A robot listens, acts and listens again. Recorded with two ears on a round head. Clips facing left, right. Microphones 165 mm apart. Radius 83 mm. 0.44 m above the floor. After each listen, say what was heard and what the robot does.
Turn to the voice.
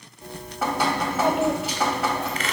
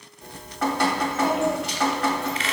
The child speaking: about 50° left or 130° left. Turn 50° left.
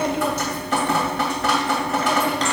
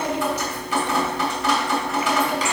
So it is at 75° left. Turn 75° left.
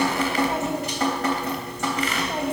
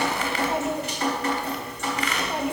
Facing the child speaking.